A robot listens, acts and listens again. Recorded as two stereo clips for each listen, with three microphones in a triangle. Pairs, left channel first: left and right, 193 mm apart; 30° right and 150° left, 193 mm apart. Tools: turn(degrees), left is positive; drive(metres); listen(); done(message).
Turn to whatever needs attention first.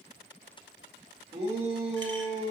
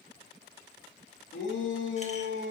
turn(degrees=-30)
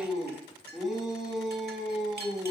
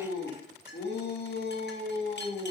done("Facing the shout.")